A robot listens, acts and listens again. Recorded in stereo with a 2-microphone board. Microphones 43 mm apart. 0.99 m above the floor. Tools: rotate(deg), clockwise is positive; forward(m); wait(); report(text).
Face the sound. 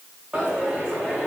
rotate(15)
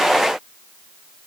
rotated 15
wait()
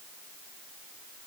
report("I heard a dropped coin, but can't make it out now. It was about straight ahead or 150° right.")